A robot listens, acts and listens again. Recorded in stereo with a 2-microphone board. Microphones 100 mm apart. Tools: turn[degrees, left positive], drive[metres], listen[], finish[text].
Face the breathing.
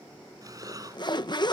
Thought: The breathing: about 40° right or 140° right.
Action: turn[-40]
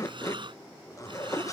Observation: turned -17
Thought: So it is at 125° right.
Action: turn[-125]
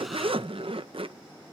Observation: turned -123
Action: listen[]
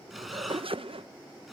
Action: finish[Facing the breathing.]